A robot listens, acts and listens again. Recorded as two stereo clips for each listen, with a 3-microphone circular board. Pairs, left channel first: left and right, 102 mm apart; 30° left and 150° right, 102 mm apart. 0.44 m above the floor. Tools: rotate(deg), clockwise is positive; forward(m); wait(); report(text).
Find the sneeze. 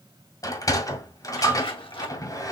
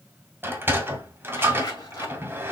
wait()
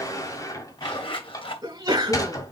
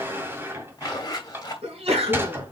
rotate(140)
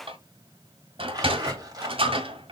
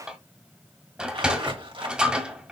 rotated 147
rotate(-10)
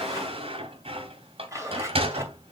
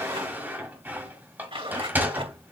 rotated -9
report("I heard a sneeze from this way, but can't make it out now.")